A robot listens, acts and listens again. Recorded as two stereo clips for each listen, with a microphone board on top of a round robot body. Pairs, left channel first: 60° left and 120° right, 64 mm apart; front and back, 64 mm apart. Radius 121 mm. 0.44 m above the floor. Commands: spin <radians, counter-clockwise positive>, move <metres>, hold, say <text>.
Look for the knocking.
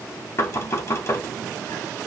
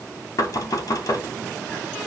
spin 0.44
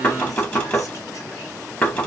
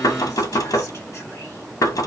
say Facing the knocking.